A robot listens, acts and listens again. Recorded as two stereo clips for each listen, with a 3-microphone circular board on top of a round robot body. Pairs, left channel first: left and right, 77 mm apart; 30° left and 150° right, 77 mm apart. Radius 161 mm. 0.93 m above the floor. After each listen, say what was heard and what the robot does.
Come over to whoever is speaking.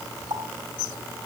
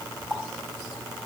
Keep listening.
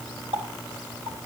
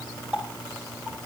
Keep listening.
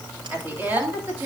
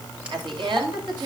The woman speaking: 155° right. Turn 155° right.
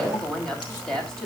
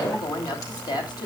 Drive 1.0 m forward.
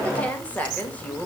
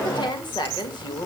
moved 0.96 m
The woman speaking is now 20° left. Turn 20° left.
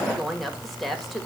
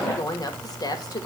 Drive 1.0 m forward.
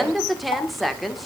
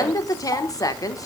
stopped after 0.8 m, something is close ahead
I am next to the woman speaking.